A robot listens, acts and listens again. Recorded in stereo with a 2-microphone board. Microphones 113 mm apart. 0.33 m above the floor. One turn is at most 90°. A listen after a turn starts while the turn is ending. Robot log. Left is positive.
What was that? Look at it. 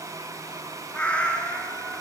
cmd yaw +30
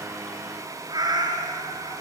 note: So it is at 40° right.
cmd yaw -40
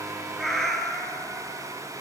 end: Facing the cat meowing, 2 to 4 m away.